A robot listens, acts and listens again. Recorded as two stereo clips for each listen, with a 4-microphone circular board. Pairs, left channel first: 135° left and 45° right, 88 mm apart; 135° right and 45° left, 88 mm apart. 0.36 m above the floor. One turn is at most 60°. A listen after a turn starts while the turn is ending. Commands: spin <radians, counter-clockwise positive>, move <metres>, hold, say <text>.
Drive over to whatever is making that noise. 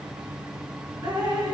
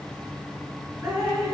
spin -0.17
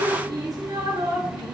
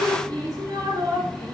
move 1.0
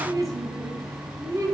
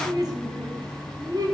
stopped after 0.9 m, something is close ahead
say Arrived at the dripping, straight ahead.